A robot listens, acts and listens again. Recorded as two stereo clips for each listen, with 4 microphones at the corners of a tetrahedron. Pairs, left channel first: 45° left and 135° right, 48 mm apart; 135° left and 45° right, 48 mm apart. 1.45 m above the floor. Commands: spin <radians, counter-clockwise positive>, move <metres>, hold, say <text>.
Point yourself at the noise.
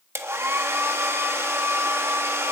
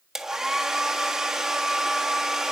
spin -2.09
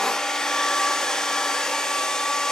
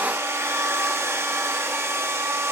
spin -0.61
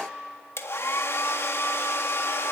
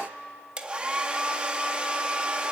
spin 0.35
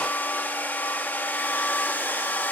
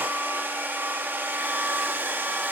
say Found it: a hair dryer, straight ahead, 1 to 2 m away.